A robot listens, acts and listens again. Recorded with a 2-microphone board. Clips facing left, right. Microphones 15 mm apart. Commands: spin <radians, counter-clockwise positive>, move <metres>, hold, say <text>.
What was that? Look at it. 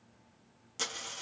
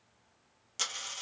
spin -0.35
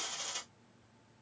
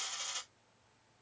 say Found it: a dropped coin, straight ahead.